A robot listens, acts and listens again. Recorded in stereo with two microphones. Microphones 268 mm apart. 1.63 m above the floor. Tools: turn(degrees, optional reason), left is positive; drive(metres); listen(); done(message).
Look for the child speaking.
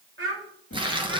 turn(degrees=-50, reason="The child speaking: about 50° right or 130° right.")
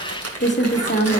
listen()
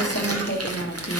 listen()
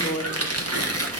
done("I heard a child speaking, but can't make it out now. It was about straight ahead or 80° right.")